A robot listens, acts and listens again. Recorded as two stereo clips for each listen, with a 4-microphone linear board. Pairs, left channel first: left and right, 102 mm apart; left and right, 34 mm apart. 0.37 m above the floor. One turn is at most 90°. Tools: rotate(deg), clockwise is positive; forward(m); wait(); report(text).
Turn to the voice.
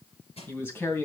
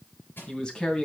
rotate(-20)
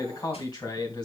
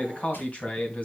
rotate(-90)
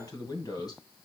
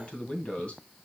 rotate(-45)
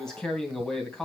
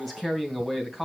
report("Facing the man speaking.")